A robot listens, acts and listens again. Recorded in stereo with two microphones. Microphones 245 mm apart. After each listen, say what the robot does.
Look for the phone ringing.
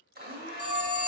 Turn 70° left.
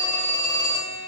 Turn 15° left.
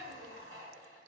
Keep listening.
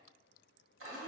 Keep listening.
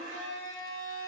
Facing where the phone ringing came from. I can't hear it now.